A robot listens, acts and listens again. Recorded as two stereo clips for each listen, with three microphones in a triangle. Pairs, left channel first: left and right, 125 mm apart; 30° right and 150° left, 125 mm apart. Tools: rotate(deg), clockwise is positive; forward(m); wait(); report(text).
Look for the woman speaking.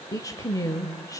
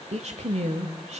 rotate(-150)
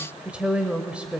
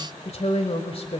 rotate(10)
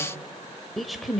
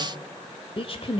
report("Found it: a woman speaking, straight ahead.")